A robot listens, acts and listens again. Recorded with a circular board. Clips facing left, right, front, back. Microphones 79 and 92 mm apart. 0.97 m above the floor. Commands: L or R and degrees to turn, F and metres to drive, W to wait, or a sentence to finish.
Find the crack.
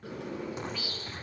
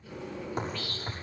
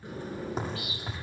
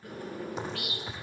R45
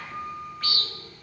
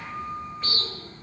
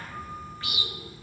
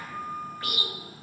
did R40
I heard a crack from this way, but can't make it out now.